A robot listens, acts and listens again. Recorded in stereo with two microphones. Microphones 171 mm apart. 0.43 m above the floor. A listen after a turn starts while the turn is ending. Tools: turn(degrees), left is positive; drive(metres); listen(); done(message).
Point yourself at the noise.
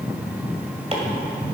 turn(degrees=-40)
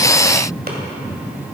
listen()
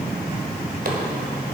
listen()
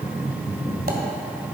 done("I heard chopping, but can't make it out now. It was about straight ahead or 100° right.")